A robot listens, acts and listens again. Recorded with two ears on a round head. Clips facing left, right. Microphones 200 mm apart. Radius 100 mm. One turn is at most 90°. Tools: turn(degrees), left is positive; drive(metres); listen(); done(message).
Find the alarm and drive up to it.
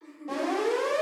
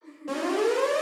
turn(degrees=-90)
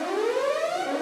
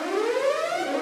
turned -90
drive(metres=1.0)
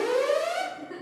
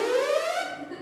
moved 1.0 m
turn(degrees=-10)
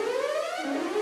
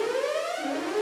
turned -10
drive(metres=1.0)
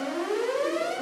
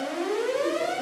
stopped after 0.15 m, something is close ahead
done("Arrived at the alarm, straight ahead.")